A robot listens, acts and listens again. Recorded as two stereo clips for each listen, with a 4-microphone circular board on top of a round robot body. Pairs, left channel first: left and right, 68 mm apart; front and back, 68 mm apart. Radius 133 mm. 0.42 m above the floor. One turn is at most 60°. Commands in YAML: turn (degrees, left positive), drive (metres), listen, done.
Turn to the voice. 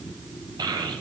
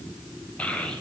turn: -60
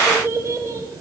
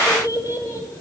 turn: -40
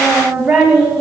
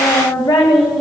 turn: -10
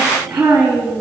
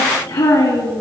turn: -10
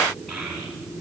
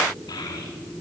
done: "Found it: a child speaking, straight ahead, 2 to 4 m away."